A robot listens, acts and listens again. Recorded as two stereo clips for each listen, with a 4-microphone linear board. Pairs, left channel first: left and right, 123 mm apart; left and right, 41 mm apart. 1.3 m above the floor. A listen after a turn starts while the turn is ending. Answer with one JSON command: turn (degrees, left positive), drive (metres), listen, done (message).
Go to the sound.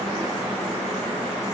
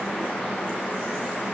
{"listen": true}
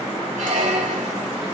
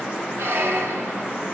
{"turn": -90}
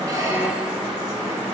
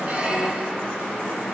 {"listen": true}
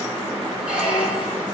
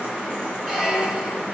{"turn": -10}
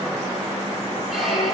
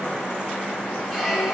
{"drive": 1.0}
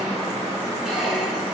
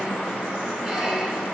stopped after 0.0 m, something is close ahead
{"done": "Blocked. The squeak is further on, straight ahead."}